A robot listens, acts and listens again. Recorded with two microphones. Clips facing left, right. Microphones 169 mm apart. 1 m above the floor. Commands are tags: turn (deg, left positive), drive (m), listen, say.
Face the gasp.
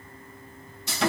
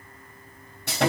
<listen/>
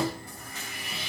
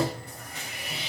<listen/>
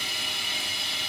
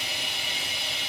<say>I can't make out a gasp to turn to.</say>